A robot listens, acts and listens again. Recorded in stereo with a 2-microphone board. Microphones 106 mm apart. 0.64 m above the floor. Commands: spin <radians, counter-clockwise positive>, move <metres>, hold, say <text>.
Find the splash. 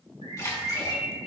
spin 0.61
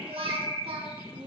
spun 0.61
hold
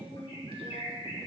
say I heard a splash, but can't make it out now. It was about straight ahead or 110° left.